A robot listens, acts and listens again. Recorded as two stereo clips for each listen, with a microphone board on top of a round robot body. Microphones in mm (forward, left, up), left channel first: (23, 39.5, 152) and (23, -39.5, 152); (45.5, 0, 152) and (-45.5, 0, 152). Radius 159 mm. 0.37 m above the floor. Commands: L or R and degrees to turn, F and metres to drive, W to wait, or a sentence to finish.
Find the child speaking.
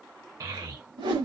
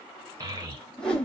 R135
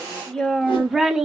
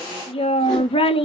Found it: a child speaking, straight ahead, 1 to 2 m away.